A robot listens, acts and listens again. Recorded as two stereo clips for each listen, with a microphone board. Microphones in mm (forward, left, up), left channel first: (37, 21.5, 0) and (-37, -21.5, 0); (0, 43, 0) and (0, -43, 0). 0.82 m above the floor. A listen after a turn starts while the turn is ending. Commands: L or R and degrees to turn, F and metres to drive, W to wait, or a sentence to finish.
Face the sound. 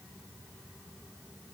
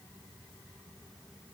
W
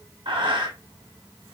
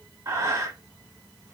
R140
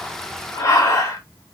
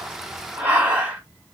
R20
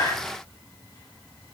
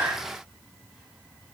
W
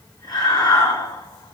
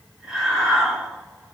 Facing the breathing, 1 to 2 m away.